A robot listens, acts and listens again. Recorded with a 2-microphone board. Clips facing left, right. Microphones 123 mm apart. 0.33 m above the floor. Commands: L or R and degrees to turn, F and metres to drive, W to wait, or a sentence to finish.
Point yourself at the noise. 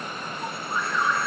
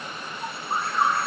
R45
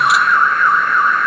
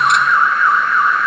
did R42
Facing the alarm.